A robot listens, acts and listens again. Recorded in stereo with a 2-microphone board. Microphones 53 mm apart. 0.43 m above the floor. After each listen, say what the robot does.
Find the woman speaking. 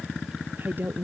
Turn 40° right.
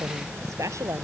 Turn 105° right.
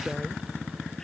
Keep listening.
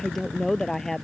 Turn 10° left.
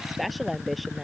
Found it: a woman speaking, straight ahead.